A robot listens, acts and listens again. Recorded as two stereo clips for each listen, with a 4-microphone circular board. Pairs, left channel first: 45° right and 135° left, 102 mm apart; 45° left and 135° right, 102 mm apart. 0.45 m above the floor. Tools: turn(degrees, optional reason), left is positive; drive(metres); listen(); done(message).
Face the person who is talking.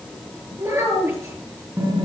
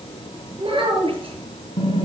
turn(degrees=-165, reason="The child speaking: 165° right.")
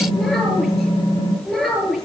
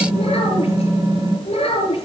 turn(degrees=40, reason="The child speaking is now 40° left.")
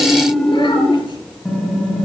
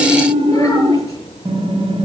listen()
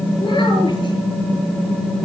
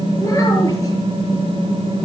listen()
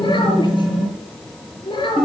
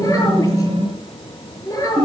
turn(degrees=-10, reason="The child speaking is now 10° right.")
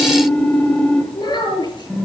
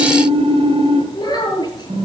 done("Found it: a child speaking, straight ahead.")